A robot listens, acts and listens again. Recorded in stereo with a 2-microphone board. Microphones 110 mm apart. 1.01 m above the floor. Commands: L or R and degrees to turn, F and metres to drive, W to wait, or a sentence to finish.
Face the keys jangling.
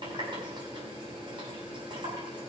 W
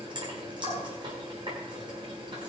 W
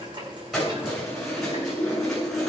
L30
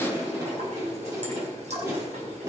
R30
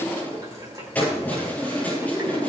L10
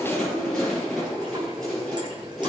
Facing the keys jangling, over 4 m away.